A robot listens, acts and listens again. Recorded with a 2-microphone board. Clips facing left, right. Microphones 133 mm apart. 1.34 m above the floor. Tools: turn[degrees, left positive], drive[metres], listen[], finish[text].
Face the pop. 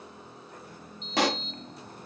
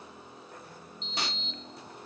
Action: turn[90]
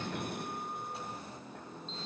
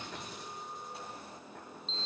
Action: finish[I heard a pop from this way, but can't make it out now.]